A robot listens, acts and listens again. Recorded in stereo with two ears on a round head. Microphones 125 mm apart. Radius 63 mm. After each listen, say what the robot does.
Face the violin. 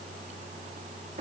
Keep listening.
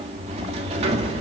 Keep listening.
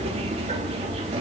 I can't make out a violin to turn to.